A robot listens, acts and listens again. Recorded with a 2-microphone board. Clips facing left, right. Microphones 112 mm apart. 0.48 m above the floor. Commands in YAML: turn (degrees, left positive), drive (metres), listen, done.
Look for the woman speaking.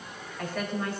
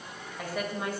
turn: -30
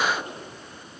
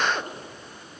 listen: true
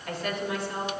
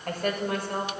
turn: -125
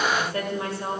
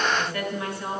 turn: 35
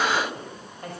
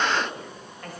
turn: 25
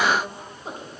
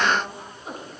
turn: 30
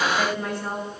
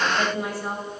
turn: -10
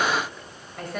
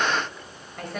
done: "Facing the woman speaking."